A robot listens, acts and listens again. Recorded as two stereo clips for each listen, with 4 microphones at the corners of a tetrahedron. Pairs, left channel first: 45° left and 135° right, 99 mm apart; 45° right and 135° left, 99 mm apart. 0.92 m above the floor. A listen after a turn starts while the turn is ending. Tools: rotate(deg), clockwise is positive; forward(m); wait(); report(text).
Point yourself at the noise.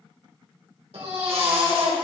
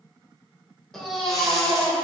rotate(135)
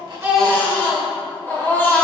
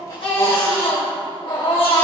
rotate(25)
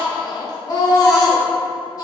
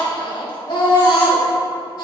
report("Facing the baby crying.")